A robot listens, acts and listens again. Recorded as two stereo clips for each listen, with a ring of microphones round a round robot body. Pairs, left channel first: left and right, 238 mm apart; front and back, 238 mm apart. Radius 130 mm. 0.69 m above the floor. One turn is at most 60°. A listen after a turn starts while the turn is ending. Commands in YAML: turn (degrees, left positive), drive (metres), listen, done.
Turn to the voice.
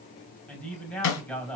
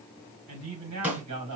turn: 60
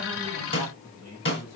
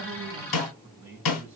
turn: 60
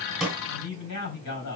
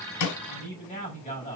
turn: 60
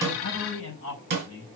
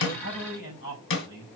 turn: 40
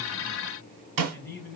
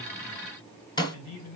done: "Facing the man speaking."